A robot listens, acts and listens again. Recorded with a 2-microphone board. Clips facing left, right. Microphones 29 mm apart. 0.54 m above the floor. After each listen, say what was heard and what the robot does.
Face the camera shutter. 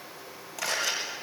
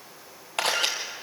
The camera shutter: about 60° right or 120° right. Turn 60° right.
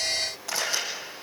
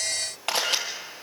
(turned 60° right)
So it is at 65° right. Turn 65° right.
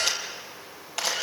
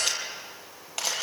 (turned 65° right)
Facing the camera shutter, over 4 m away.